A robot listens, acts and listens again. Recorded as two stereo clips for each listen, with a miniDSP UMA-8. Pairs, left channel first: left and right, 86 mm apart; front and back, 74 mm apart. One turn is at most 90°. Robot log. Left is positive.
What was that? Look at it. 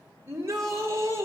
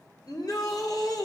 note: The shout: 30° right.
cmd yaw -30
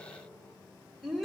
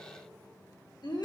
end: Found it: a shout, straight ahead.